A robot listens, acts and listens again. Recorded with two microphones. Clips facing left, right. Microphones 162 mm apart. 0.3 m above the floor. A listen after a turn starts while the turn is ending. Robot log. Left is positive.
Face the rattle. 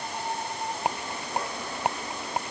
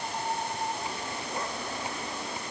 note: The rattle: about 70° left or 110° left.
cmd yaw +70
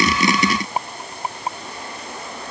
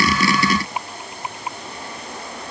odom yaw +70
note: So it is at 40° left.
cmd yaw +40
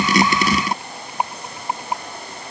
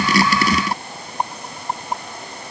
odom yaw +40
note: The rattle is now 10° left.
cmd yaw +10
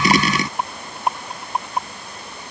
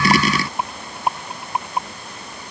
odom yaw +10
end: Facing the rattle.